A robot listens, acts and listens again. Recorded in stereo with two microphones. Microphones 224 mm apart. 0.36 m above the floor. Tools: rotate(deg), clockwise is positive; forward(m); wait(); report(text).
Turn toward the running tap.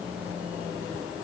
wait()
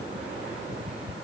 wait()
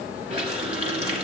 rotate(25)
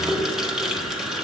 report("Facing the running tap, 2 to 4 m away.")